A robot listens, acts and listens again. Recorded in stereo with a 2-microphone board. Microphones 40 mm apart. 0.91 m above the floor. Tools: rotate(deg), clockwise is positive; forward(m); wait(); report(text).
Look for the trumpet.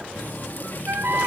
rotate(70)
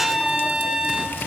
rotate(15)
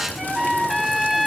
report("Found it: a trumpet, straight ahead, 2 to 4 m away.")